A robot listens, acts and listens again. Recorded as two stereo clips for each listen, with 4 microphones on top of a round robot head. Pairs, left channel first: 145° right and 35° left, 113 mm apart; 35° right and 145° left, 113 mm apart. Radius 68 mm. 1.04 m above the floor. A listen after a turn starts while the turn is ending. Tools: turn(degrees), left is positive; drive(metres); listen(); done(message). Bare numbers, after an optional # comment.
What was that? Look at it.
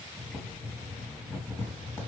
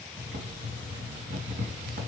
# The boiling: 140° left.
turn(140)
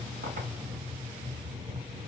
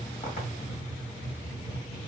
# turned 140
# The boiling is now 15° right.
turn(-15)
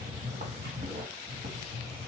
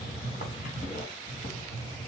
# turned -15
done("Found it: boiling, straight ahead, 1 to 2 m away.")